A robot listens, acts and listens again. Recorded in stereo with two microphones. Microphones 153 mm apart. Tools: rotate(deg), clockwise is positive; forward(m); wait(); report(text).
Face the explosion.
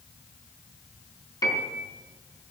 wait()
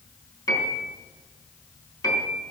wait()
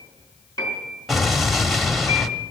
rotate(-30)
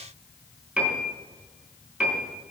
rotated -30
wait()
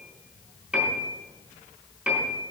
report("I heard an explosion, but can't make it out now. It was about 30° right or 150° left.")